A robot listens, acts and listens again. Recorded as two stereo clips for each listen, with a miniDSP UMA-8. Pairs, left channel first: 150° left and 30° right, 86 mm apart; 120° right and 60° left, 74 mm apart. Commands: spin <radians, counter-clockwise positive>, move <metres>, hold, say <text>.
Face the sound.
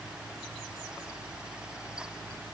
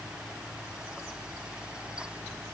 hold
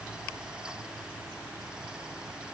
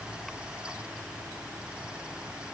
hold
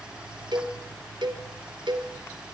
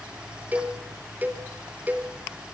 say Found it: a cowbell, straight ahead, 2 to 4 m away.